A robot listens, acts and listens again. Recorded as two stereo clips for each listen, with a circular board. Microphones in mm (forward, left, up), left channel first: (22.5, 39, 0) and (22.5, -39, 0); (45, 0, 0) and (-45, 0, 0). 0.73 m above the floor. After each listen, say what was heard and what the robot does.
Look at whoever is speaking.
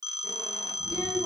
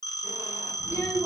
The child speaking: 70° left. Turn 70° left.
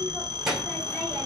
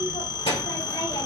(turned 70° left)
Facing the child speaking, 2 to 4 m away.